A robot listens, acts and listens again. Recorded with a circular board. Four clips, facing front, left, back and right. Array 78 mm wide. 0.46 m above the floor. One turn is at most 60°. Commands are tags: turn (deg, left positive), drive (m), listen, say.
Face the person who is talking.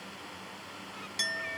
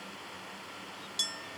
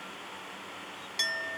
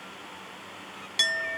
<listen/>
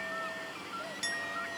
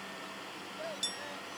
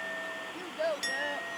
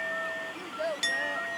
<turn deg="-60"/>
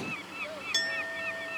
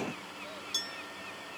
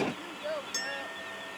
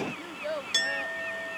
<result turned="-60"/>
<turn deg="-60"/>
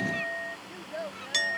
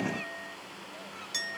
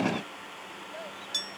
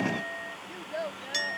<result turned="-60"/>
<turn deg="-60"/>
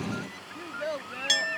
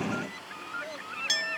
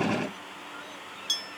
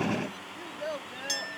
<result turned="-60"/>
<turn deg="-30"/>
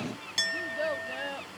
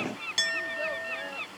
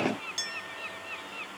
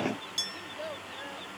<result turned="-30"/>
<listen/>
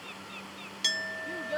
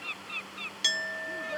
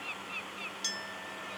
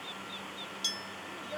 <turn deg="10"/>
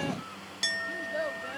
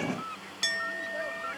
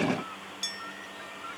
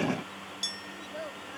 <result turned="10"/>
<say>Facing the child speaking.</say>